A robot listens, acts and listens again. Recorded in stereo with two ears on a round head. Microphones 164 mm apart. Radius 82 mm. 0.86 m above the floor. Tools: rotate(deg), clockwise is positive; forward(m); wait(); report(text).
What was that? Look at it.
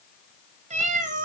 rotate(45)
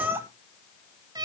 rotate(20)
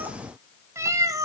rotate(20)
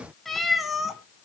report("Found it: a cat meowing, straight ahead.")